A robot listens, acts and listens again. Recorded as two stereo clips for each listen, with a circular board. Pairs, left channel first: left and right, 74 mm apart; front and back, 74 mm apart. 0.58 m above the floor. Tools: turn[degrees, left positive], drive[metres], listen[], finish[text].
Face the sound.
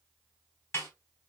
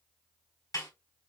Thought: The snare drum: 35° left.
Action: turn[35]
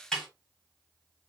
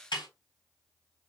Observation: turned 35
Action: finish[Found it: a snare drum, straight ahead, 2 to 4 m away.]